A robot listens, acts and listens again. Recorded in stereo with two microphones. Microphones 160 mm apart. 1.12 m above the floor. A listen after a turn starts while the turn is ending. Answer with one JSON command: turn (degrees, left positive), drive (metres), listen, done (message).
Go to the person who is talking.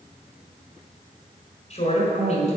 {"turn": 45}
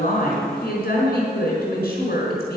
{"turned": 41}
{"turn": 95}
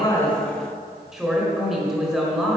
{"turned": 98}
{"drive": 1.0}
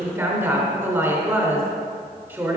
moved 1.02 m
{"turn": -15}
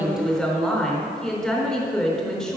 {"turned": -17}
{"drive": 1.0}
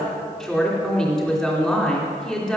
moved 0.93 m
{"drive": 1.0}
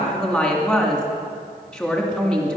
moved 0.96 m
{"drive": 1.0}
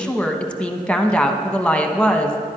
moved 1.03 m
{"drive": 1.0}
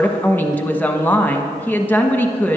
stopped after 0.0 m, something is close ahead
{"turn": 10}
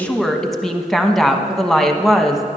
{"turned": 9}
{"done": "Arrived at the woman speaking, straight ahead."}